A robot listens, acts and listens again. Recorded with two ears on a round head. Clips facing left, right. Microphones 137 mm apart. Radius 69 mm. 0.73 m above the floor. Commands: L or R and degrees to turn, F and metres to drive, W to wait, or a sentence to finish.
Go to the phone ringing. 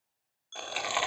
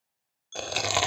R30
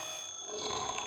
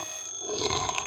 R135
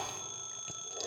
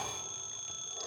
F1.0
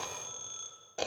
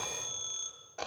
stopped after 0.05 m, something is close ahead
Something is in my way. I am facing the phone ringing but have not reached it.